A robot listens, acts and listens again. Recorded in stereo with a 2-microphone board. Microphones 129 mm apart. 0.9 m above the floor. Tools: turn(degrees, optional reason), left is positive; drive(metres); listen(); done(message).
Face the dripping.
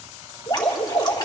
turn(degrees=30, reason="The dripping: about 30° left or 150° left.")
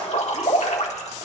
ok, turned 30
turn(degrees=120, reason="So it is at 120° left.")
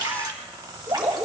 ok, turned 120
turn(degrees=-30, reason="The dripping is now 30° right.")
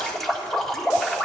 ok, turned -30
done("Found it: dripping, straight ahead, 1 to 2 m away.")